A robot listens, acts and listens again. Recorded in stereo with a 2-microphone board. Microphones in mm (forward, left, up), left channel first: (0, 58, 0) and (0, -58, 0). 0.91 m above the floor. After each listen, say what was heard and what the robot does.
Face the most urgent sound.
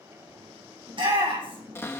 The shout: about 50° right or 130° right. Turn 50° right.
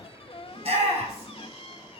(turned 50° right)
So it is at 80° right. Turn 80° right.
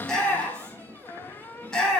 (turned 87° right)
Found it: a shout, straight ahead.